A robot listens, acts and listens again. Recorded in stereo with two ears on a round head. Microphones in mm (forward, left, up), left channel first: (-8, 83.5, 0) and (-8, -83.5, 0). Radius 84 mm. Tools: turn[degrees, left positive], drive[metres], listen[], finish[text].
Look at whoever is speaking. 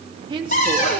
Thought: The woman speaking: about 25° right or 155° right.
Action: turn[-25]
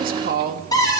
Thought: So it is at 125° right.
Action: turn[-125]
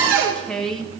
Action: finish[Facing the woman speaking, 2 to 4 m away.]